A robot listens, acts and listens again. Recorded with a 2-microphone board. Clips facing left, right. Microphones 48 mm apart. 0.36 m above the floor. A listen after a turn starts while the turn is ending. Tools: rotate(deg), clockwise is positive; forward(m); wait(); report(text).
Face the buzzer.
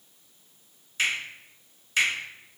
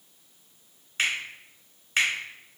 wait()
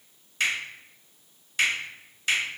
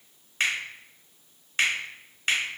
wait()
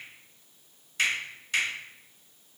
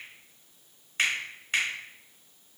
report("I can't make out a buzzer, only a finger snap.")